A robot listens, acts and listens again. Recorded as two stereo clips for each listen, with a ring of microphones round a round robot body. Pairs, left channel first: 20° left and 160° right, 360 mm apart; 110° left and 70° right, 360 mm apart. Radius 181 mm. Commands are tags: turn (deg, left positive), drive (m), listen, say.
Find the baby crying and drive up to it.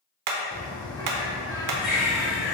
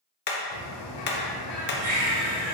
<turn deg="-40"/>
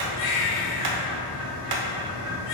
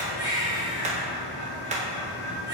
<turn deg="10"/>
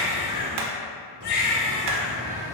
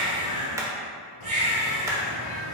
<drive m="1.0"/>
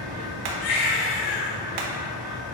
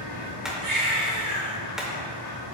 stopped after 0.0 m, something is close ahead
<say>Something is in my way. I am facing the baby crying but have not reached it.</say>